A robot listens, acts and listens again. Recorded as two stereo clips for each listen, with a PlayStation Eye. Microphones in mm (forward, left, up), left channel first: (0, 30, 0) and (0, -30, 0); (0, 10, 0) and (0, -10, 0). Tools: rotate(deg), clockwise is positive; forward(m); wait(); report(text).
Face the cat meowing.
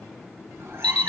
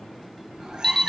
rotate(40)
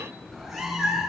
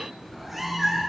report("Found it: a cat meowing, straight ahead.")